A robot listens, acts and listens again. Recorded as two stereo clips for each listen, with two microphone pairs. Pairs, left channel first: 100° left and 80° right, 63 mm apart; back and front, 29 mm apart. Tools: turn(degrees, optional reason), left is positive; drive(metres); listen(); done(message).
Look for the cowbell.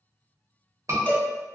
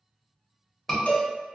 turn(degrees=160, reason="The cowbell: 160° left.")
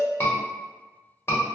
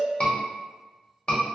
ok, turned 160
listen()
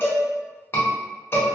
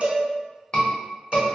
turn(degrees=50, reason="The cowbell is now 50° left.")
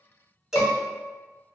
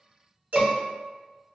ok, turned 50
done("Found it: a cowbell, straight ahead, under 1 m away.")